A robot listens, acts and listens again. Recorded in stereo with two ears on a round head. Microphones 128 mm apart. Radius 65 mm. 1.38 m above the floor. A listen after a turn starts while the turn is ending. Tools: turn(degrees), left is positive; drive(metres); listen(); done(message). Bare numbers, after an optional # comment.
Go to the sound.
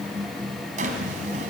# The drawer: about 55° right or 125° right.
turn(-55)
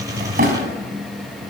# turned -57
# So it is at 60° right.
turn(-60)
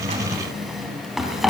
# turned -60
drive(1.0)
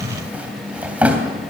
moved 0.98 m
# The drawer is now 10° right.
turn(-10)
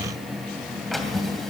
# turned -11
drive(1.0)
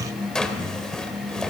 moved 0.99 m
drive(1.0)
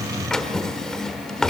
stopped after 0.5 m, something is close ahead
done("Arrived at the drawer, straight ahead.")